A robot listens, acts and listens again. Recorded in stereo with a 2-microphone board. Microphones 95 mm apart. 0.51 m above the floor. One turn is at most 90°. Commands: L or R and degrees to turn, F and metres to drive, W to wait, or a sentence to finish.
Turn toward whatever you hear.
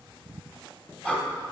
L30
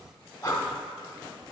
L90
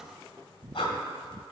L65
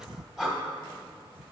Found it: breathing, straight ahead.